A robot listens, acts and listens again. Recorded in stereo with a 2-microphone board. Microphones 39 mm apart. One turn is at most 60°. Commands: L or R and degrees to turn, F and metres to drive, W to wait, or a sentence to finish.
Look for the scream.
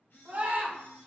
R60
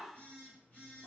Facing the scream.